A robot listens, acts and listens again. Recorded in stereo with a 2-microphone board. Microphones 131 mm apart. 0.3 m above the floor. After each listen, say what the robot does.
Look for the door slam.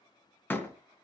Turn 15° left.
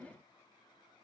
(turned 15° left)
Keep listening.
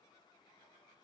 I heard a door slam, but can't make it out now. It was about straight ahead or 150° left.